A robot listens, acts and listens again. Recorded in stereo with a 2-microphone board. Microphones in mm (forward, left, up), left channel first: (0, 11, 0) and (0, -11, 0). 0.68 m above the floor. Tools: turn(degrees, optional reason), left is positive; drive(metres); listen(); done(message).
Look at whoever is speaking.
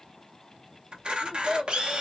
turn(degrees=-30)
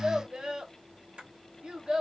turn(degrees=-140, reason="So it is at 140° right.")
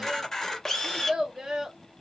turn(degrees=-30, reason="The child speaking is now 30° right.")
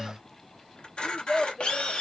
turn(degrees=20, reason="The child speaking is now 20° left.")
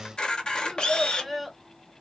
done("Facing the child speaking.")